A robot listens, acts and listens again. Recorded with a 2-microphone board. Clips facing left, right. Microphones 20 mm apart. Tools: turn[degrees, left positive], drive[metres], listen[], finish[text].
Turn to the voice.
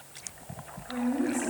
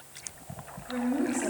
Thought: The woman speaking: about 15° right or 165° right.
Action: turn[-15]
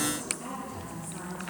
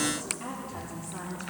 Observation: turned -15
Thought: The woman speaking: about 25° right or 155° right.
Action: turn[-25]
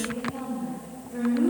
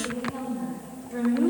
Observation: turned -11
Thought: The woman speaking: about 30° right or 150° right.
Action: turn[-30]
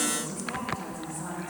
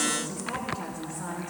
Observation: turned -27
Thought: So it is at 135° right.
Action: turn[-135]
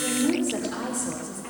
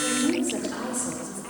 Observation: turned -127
Action: finish[Facing the woman speaking, 2 to 4 m away.]